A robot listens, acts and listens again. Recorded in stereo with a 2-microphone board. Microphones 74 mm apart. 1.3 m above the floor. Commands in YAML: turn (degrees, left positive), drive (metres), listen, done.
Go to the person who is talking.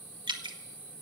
listen: true
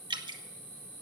listen: true
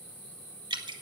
done: "I can't make out anyone speaking, only dripping."